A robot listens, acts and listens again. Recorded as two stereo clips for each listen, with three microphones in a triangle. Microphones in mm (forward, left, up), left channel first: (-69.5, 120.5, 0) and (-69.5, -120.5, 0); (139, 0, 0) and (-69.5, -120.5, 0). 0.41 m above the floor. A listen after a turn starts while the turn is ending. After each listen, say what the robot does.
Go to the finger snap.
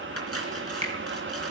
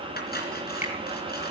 Turn 30° right.
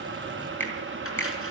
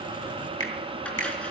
Turn 10° left.
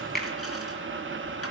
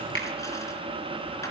Drive 1.0 m forward.
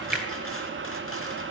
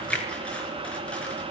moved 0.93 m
Keep listening.
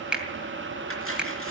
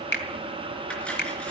Drive 1.0 m forward.
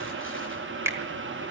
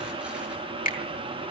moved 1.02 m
Turn 15° right.
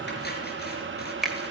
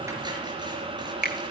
Drive 1.0 m forward.
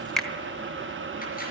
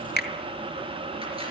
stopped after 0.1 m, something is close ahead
I am next to the finger snap.